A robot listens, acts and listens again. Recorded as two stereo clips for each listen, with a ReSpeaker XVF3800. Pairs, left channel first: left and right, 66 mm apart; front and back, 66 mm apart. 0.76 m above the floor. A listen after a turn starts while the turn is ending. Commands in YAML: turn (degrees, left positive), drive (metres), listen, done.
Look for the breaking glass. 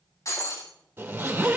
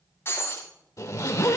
turn: 50
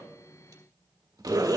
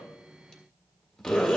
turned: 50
done: "I heard breaking glass from this way, but can't make it out now."